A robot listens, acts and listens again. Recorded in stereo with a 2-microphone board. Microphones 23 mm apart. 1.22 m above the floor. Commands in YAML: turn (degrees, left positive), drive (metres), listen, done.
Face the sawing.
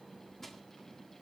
listen: true
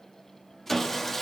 turn: 30
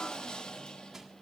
turn: 135
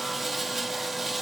done: "Facing the sawing, 1 to 2 m away."